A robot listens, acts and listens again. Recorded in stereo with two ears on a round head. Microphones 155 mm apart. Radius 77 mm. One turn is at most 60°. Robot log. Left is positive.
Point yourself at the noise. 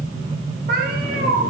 note: The cat meowing: about 55° right or 125° right.
cmd yaw -55
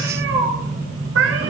note: So it is at 85° right.
cmd yaw -60
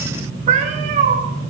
note: The cat meowing is now 45° right.
cmd yaw -45
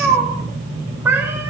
note: The cat meowing is now 15° right.
cmd yaw -15
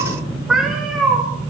end: Facing the cat meowing, 2 to 4 m away.